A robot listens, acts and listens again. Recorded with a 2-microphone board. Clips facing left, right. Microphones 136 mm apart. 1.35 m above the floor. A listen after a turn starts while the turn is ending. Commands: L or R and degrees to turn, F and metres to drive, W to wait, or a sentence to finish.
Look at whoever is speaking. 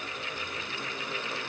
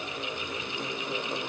W
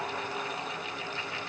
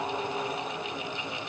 W
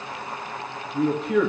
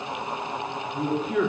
L75
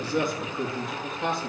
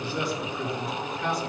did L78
L25
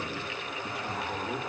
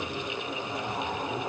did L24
Facing the man speaking, 2 to 4 m away.